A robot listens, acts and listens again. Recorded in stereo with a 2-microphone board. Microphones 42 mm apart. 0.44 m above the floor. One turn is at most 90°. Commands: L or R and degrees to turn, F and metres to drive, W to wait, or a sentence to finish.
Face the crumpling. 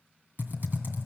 W
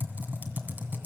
W
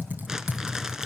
R30
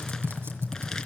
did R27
W
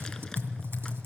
W
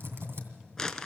L15
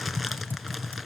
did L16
W
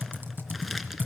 W
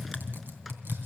Facing where the crumpling came from. I can't hear it now.